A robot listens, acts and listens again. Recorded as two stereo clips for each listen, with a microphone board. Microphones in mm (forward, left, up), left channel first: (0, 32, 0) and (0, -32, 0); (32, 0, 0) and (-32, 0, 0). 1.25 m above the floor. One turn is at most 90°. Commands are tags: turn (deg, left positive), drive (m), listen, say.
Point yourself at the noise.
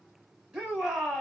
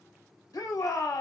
<turn deg="-15"/>
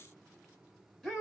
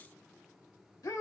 <say>Found it: a shout, straight ahead.</say>